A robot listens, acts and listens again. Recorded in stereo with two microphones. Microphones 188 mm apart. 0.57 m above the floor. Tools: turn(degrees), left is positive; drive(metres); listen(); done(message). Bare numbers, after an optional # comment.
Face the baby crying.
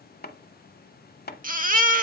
# The baby crying: about 50° right or 130° right.
turn(-50)
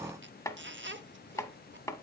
listen()
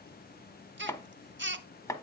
# So it is at 80° right.
turn(-80)
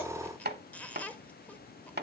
listen()
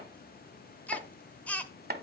# The baby crying is now 10° left.
turn(10)
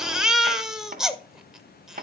done("Facing the baby crying.")